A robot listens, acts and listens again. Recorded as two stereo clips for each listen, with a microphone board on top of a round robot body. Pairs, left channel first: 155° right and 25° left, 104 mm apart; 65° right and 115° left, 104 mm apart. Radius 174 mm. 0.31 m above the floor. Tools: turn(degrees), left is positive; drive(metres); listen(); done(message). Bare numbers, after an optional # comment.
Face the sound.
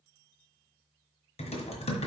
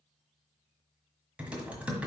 # The typing on a keyboard: 170° right.
turn(-170)
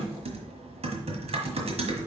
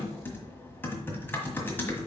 done("Found it: typing on a keyboard, straight ahead.")